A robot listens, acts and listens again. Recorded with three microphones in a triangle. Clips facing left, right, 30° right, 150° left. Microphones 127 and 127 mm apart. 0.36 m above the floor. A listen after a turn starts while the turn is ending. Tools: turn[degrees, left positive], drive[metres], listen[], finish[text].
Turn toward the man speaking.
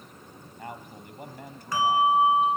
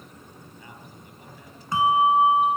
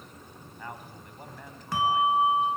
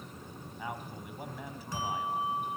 Thought: The man speaking: 70° left.
Action: turn[70]
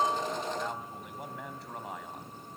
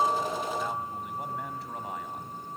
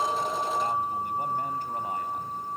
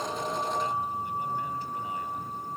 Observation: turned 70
Action: listen[]
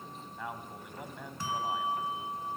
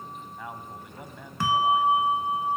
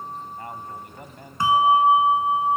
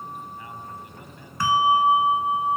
Action: finish[Found it: a man speaking, straight ahead, 2 to 4 m away.]